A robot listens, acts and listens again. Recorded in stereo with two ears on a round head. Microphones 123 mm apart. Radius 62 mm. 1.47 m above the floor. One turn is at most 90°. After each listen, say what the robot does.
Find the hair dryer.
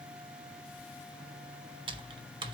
Keep listening.
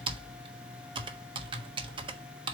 Keep listening.
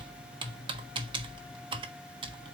I can't make out a hair dryer, only typing on a keyboard.